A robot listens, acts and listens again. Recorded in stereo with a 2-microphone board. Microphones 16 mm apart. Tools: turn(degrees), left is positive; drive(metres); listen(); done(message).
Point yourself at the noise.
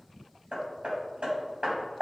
turn(degrees=-70)
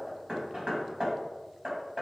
turn(degrees=-45)
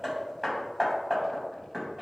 turn(degrees=-20)
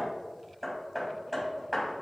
done("Facing the hammering, 2 to 4 m away.")